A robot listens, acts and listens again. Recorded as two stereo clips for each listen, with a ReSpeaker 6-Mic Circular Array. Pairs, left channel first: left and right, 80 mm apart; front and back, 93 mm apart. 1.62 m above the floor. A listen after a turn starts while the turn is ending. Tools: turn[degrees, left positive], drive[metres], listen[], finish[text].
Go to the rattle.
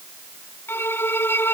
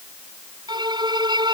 Action: listen[]
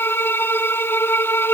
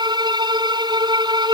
Action: listen[]
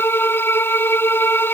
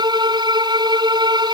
Action: finish[I can't make out a rattle, only a violin.]